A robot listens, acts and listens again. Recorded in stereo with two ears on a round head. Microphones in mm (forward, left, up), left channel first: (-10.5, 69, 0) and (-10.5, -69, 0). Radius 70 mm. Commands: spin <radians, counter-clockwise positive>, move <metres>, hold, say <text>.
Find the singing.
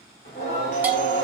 spin 1.05
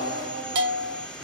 spin -0.35
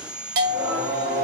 spin -0.35
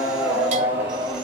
spin -0.26
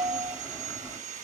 say Found it: singing, straight ahead, 2 to 4 m away.